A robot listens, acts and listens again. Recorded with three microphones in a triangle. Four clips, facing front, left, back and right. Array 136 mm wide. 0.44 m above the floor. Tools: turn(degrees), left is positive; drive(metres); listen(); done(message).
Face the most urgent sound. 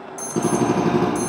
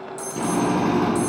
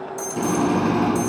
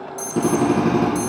turn(degrees=25)
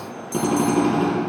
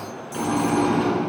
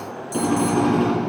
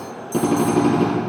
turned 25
done("Found it: an alarm, straight ahead, 1 to 2 m away.")